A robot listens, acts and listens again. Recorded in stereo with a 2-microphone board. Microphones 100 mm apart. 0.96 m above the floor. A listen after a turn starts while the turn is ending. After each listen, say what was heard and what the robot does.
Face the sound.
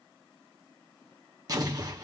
The explosion: about 35° right or 145° right. Turn 35° right.
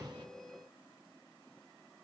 Keep listening.
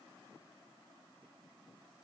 I heard an explosion, but can't make it out now. It was about straight ahead or 110° right.